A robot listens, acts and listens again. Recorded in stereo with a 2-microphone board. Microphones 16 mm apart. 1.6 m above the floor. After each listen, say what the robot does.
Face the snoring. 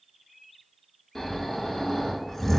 Turn 30° left.
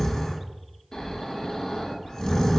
Turn 120° left.
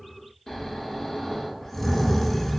Turn 25° left.
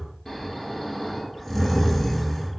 Turn 20° left.
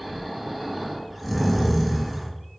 Found it: snoring, straight ahead, under 1 m away.